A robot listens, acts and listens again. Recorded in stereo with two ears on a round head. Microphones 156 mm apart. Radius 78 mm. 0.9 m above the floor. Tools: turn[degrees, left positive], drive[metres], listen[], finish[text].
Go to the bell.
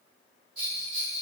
Action: turn[-30]
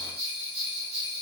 Thought: So it is at 140° right.
Action: turn[-140]
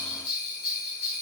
Thought: The bell is now 10° right.
Action: turn[-10]
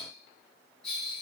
Action: drive[1.0]
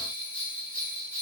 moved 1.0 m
Action: drive[1.0]
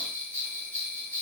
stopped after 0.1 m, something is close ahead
Thought: The bell is now 10° left.
Action: turn[10]
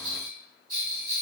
Action: finish[Arrived at the bell, straight ahead.]